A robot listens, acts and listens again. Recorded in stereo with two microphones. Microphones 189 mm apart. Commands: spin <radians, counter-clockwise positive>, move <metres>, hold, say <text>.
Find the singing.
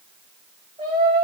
spin -0.52
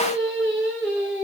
say Facing the singing.